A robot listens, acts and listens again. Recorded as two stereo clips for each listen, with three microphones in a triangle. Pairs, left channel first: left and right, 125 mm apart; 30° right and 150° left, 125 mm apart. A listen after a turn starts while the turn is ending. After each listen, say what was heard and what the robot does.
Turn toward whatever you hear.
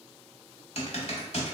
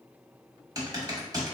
The typing on a keyboard: 100° left. Turn 100° left.
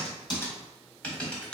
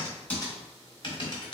The typing on a keyboard is now 10° left. Turn 10° left.
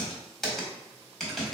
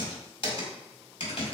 Found it: typing on a keyboard, straight ahead.